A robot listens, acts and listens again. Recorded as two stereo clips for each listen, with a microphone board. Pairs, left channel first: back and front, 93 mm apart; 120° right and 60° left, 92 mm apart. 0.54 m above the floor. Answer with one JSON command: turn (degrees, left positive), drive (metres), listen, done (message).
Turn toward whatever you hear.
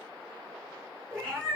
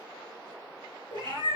{"turn": 100}
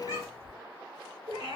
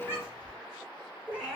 {"turn": -15}
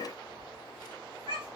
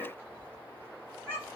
{"done": "Found it: a cat meowing, straight ahead, 2 to 4 m away."}